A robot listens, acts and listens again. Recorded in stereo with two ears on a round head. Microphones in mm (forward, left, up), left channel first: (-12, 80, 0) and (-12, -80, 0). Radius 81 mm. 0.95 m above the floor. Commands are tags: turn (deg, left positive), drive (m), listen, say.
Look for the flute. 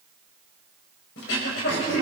<listen/>
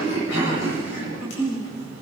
<listen/>
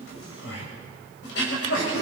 <say>I can't make out a flute, only throat clearing.</say>